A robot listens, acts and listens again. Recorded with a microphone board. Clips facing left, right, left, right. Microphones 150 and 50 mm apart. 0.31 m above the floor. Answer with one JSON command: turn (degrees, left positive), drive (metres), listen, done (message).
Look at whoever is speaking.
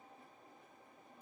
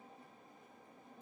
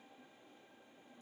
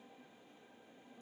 {"listen": true}
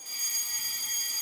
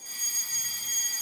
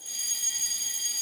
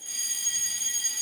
{"listen": true}
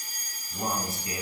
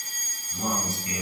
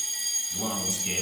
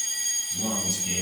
{"turn": 35}
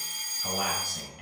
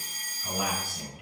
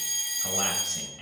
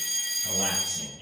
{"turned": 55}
{"turn": 90}
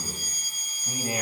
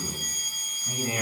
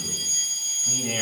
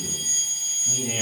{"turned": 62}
{"turn": 25}
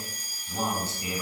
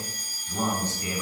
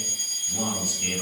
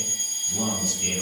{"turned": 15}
{"turn": 10}
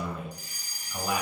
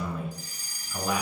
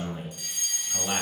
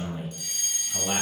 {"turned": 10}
{"done": "Found it: a man speaking, straight ahead, 2 to 4 m away."}